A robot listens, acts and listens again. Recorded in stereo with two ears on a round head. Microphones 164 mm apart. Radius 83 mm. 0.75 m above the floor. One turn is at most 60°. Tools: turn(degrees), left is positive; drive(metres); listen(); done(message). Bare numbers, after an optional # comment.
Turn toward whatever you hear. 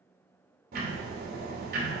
# The ticking: about 60° right or 120° right.
turn(-60)
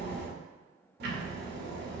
# So it is at 60° right.
turn(-60)
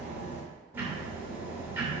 # The ticking is now 10° right.
turn(-10)
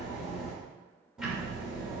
done("Facing the ticking.")